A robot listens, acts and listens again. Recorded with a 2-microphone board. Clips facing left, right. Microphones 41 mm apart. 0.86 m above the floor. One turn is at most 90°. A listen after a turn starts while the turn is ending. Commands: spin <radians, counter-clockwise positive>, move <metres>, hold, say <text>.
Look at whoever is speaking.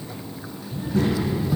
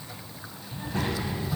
spin -0.70
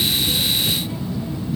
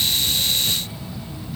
say Found it: a child speaking, straight ahead.